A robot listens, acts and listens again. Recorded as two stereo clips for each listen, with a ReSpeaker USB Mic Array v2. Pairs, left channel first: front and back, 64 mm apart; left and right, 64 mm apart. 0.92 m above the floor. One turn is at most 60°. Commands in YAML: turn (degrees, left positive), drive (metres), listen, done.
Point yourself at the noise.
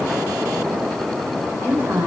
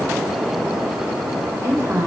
turn: -60
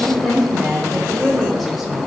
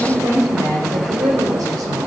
turn: -60
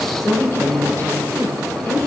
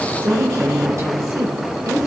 turn: -55
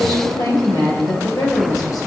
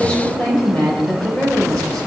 turn: 10
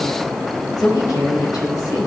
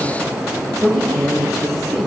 done: "Found it: a woman speaking, straight ahead, over 4 m away."